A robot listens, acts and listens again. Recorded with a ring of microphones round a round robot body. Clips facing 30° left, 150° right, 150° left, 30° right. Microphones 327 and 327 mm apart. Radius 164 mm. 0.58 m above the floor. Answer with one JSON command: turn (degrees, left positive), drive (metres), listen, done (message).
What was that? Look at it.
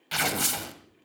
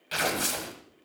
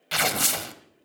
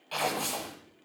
{"turn": 105}
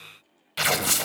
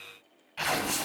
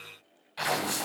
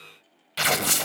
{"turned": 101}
{"done": "Found it: tearing paper, straight ahead."}